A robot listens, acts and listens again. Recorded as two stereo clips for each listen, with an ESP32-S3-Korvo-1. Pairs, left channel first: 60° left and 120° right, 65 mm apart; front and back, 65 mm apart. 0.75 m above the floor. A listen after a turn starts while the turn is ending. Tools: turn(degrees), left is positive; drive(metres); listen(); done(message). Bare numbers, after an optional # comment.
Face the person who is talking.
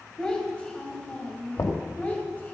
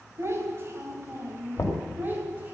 # The child speaking: 120° left.
turn(120)
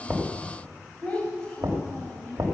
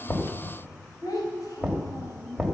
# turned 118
# The child speaking is now 20° right.
turn(-20)
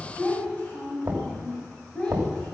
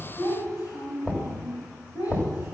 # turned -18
# The child speaking is now 15° right.
turn(-15)
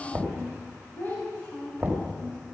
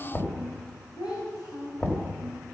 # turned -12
done("Found it: a child speaking, straight ahead, 2 to 4 m away.")